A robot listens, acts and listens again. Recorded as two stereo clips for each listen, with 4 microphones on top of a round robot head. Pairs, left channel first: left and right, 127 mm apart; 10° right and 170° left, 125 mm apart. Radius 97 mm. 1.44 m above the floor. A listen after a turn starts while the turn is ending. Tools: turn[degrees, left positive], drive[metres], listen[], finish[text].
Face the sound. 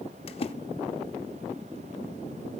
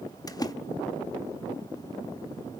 Thought: The splash: 50° left.
Action: turn[50]
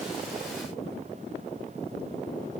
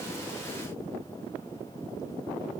Action: finish[Facing where the splash came from. I can't hear it now.]